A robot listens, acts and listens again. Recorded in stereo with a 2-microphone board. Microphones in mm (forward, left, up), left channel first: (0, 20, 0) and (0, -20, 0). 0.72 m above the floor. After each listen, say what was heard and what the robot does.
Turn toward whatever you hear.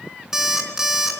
Turn 30° right.
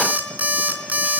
So it is at 135° right. Turn 135° right.
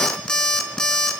The alarm clock is now 15° left. Turn 15° left.
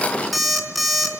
Found it: an alarm clock, straight ahead.